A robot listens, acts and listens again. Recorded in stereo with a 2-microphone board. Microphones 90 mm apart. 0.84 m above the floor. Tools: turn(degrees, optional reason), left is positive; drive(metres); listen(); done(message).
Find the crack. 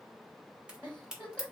turn(degrees=-30)
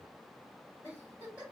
listen()
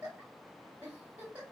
done("I heard a crack, but can't make it out now. It was about 20° left or 140° right.")